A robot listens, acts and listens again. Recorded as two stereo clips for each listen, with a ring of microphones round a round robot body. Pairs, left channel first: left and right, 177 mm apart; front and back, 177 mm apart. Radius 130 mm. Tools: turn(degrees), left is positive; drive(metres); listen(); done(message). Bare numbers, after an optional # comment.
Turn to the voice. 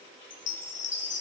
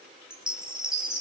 listen()
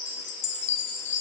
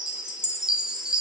listen()
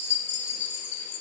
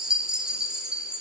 done("I can't make out anyone speaking to turn to.")